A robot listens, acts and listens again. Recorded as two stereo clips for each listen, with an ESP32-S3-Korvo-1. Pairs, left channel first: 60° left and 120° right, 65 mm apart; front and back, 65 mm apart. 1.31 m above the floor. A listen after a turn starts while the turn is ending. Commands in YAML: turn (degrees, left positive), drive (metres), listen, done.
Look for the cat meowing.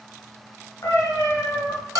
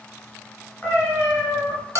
turn: 65
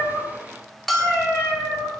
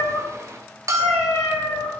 turn: 10
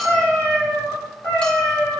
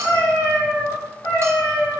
done: "Found it: a cat meowing, straight ahead, over 4 m away."